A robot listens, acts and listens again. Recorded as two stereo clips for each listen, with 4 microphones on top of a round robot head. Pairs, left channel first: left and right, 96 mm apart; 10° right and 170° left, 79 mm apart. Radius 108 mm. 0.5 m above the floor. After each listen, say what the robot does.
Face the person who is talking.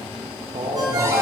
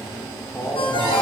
Turn 85° right.
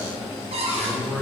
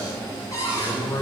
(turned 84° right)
Facing the man speaking.